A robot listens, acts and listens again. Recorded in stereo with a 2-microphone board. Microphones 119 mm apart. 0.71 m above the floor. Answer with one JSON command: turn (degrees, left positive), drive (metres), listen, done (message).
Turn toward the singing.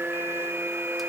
{"listen": true}
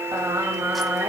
{"turn": -20}
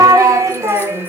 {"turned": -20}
{"turn": -20}
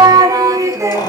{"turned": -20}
{"turn": -25}
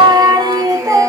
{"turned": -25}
{"turn": -25}
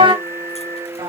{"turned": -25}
{"turn": -140}
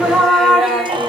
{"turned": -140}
{"done": "Facing the singing, 1 to 2 m away."}